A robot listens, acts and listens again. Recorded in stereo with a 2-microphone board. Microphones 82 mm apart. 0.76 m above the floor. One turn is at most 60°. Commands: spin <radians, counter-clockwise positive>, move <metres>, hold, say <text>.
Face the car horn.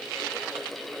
hold
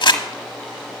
hold
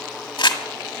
say I can't make out a car horn to turn to.